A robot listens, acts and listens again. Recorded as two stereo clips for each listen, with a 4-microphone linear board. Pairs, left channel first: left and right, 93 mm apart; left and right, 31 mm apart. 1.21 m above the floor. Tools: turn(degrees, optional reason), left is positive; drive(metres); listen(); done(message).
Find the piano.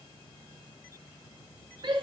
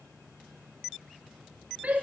listen()
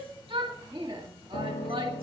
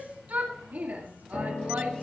turn(degrees=70, reason="The piano: about 70° left or 110° left.")
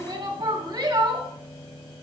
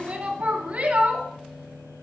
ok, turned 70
turn(degrees=10, reason="So it is at 10° left.")
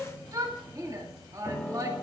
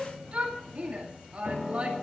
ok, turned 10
done("Found it: a piano, straight ahead.")